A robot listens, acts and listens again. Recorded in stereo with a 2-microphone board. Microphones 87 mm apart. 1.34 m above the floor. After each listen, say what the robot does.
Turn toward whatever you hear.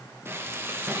Turn 25° right.
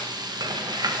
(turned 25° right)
Turn 125° right.
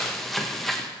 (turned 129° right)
Found it: frying, straight ahead, under 1 m away.